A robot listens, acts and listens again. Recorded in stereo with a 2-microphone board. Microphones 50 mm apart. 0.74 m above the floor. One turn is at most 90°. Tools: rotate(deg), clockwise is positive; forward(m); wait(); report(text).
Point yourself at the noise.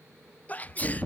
rotate(-30)
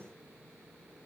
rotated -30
wait()
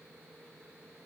report("I heard a sneeze, but can't make it out now. It was about straight ahead or 120° left.")